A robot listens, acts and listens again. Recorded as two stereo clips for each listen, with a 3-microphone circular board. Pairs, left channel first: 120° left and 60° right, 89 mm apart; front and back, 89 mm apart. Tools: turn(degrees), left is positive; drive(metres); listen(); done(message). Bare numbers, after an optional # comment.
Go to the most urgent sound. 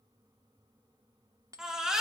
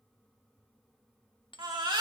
# The baby crying: 140° right.
turn(-140)
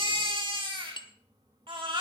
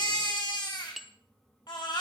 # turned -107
# The baby crying is now 35° right.
turn(-35)
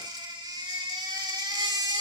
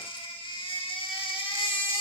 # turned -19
# The baby crying is now 20° right.
turn(-20)
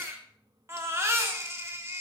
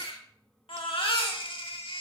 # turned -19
drive(1.0)
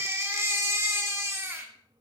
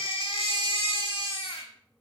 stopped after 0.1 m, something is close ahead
done("Something is in my way. I am facing the baby crying but have not reached it.")